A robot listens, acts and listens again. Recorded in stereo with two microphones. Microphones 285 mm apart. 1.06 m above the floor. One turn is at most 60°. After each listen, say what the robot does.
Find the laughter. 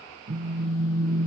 Keep listening.
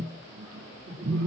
Turn 50° right.
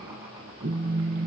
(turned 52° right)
Keep listening.
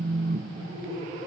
Turn 20° right.
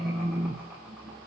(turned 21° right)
Keep listening.
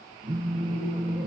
Keep listening.
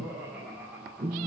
Found it: laughter, straight ahead.